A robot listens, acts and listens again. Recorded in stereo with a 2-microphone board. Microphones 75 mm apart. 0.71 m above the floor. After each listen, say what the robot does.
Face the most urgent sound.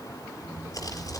Keep listening.
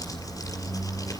Keep listening.
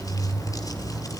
I can't make out anything urgent, only a squeak and crumpling.